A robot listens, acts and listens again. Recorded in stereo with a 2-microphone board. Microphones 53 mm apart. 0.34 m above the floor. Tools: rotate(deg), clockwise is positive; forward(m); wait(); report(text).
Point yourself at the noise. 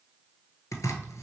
rotate(-90)
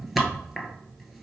report("Found it: chopping, straight ahead.")